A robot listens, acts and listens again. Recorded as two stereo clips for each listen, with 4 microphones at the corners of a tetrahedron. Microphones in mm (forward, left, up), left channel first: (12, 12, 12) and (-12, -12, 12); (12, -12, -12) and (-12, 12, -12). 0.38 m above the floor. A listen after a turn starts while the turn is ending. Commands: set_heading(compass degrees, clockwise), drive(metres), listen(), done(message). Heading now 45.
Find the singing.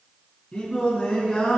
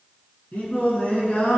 done("Found it: singing, straight ahead.")